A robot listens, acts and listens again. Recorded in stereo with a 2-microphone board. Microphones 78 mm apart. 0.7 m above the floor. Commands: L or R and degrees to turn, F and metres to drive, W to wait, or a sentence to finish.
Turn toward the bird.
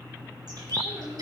R60
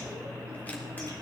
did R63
W
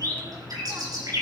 R55
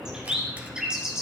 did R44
R10
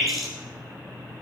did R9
Found it: a bird, straight ahead.